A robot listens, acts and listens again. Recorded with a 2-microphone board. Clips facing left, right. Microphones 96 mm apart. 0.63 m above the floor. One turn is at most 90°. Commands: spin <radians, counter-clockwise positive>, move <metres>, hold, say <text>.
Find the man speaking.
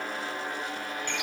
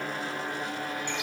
hold
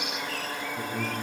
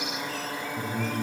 spin 0.52
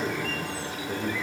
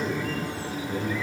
spin 1.57
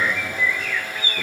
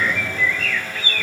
spin 1.05
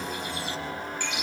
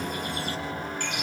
hold
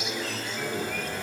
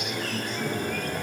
spin 0.52
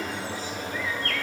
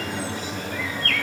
spin -0.35
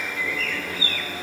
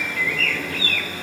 hold
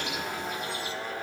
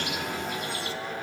hold
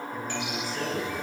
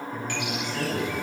say Found it: a man speaking, straight ahead.